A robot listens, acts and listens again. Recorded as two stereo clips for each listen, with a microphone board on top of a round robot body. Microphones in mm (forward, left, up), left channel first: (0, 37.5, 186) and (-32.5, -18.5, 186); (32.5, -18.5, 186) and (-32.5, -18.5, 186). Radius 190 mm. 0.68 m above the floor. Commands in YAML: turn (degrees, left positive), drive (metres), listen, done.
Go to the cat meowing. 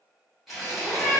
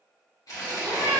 turn: 145
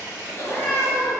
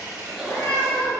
turn: -10
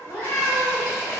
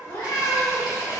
drive: 1.0
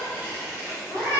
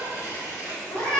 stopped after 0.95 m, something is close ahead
done: "Arrived at the cat meowing, straight ahead."